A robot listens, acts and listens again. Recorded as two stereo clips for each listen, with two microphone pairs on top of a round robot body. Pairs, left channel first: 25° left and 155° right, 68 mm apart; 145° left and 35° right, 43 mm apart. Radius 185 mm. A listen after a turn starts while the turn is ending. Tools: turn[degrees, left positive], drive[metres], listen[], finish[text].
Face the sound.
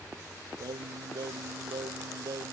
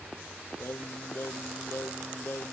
Thought: The singing: straight behind.
Action: turn[180]
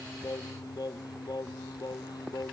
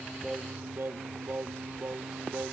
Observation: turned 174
Thought: The singing is now 10° left.
Action: turn[10]
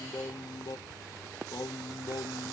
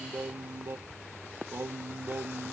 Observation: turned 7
Action: finish[Facing the singing.]